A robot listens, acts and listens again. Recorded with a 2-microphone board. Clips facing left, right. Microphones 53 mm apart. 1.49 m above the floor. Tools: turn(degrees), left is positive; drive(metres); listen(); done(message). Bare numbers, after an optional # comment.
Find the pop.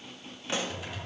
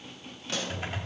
# The pop: about 20° left or 160° left.
turn(20)
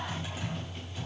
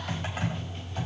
listen()
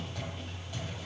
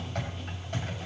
done("I heard a pop, but can't make it out now. It was about straight ahead or 140° left.")